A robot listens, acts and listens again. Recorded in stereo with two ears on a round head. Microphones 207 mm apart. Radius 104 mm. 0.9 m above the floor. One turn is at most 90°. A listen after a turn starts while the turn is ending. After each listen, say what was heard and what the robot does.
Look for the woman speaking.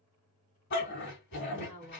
The woman speaking: about 30° left or 150° left. Turn 30° left.
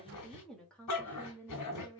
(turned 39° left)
So it is at 15° left. Turn 15° left.
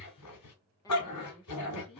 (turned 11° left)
The woman speaking is now 20° left. Turn 20° left.
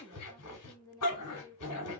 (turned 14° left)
The woman speaking is now 15° left. Turn 15° left.
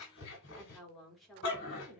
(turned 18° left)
Facing the woman speaking, 2 to 4 m away.